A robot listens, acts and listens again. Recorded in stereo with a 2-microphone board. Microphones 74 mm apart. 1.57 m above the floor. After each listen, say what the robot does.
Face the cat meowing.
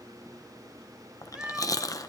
Turn 30° right.
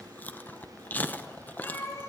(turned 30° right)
Turn 35° left.
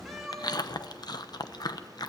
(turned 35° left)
Found it: a cat meowing, straight ahead, 2 to 4 m away.